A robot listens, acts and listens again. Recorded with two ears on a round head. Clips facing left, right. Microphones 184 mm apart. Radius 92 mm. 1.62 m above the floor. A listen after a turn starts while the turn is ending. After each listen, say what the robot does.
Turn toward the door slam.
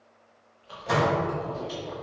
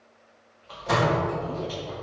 Turn 30° right.
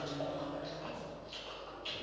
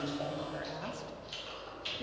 Keep listening.
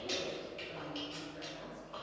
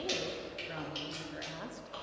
I heard a door slam, but can't make it out now. It was about 25° left or 145° right.